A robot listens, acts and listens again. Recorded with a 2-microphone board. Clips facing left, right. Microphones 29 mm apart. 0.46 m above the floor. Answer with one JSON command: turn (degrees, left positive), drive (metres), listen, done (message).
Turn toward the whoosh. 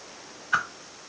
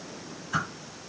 {"turn": 40}
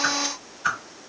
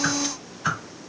{"done": "Facing the whoosh, 1 to 2 m away."}